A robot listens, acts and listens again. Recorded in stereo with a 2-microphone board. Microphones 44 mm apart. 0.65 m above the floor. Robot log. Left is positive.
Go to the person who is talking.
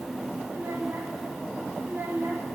note: The child speaking: about 60° right or 120° right.
cmd yaw -60
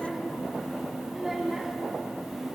cmd fwd 1.0
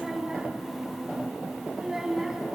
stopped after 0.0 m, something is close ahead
end: Something is in my way. I am facing the child speaking but have not reached it.